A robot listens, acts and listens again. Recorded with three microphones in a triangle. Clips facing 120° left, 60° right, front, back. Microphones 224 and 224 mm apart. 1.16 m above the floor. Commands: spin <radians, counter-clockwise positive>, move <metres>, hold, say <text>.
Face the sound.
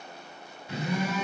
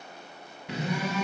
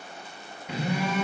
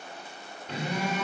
spin -1.40
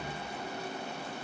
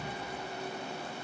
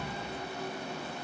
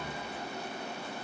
spin 0.35
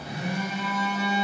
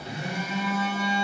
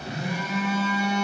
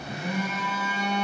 say Found it: a phone buzzing, straight ahead, 1 to 2 m away.